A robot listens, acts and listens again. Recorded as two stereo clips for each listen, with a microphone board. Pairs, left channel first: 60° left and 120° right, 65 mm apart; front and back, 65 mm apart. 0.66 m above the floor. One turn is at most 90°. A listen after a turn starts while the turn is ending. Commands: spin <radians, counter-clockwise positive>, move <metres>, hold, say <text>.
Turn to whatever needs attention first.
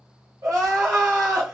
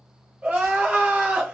spin -1.57
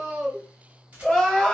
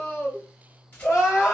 spin -0.26
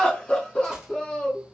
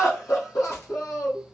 say Facing the crying.